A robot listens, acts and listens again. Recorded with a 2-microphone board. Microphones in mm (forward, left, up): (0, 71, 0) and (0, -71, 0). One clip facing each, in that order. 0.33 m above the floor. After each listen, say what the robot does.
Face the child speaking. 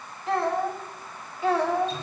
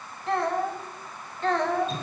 Turn 30° left.
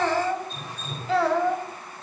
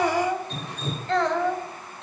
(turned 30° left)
Turn 30° left.
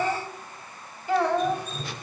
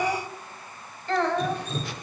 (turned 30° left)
Turn 30° left.
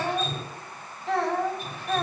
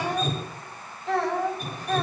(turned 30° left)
Turn 30° left.
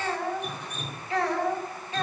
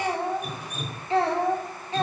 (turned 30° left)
Turn 30° right.
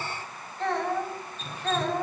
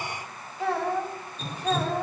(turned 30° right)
Found it: a child speaking, straight ahead.